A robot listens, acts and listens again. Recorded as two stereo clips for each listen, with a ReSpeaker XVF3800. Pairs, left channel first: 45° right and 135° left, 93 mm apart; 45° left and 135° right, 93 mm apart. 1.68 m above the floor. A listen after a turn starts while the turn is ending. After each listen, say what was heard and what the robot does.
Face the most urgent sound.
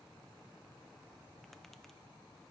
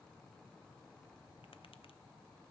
Keep listening.
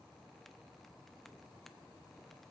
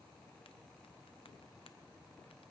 Keep listening.
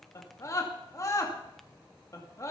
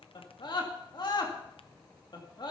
The scream: 10° left. Turn 10° left.
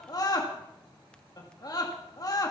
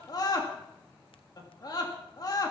Found it: a scream, straight ahead, 2 to 4 m away.